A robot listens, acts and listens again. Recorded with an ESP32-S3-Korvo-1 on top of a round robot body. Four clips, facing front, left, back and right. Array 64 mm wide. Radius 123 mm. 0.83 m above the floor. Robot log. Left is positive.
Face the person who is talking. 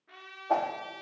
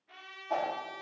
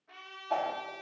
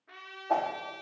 cmd idle
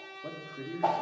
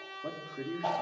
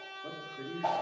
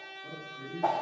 note: The man speaking: 60° left.
cmd yaw +60
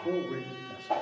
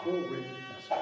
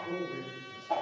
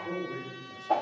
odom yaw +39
note: The man speaking is now 20° left.
cmd yaw +20
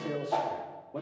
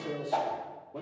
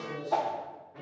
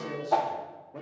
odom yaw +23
end: Found it: a man speaking, straight ahead, 2 to 4 m away.